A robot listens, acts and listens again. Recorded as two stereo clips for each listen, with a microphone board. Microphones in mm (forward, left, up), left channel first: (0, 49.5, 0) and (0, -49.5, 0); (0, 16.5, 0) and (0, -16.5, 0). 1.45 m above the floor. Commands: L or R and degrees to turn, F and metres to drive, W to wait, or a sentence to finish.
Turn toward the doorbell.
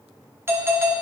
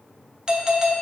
R25
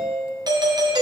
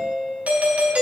R125
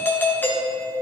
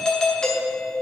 L25
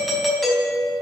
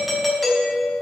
Found it: a doorbell, straight ahead.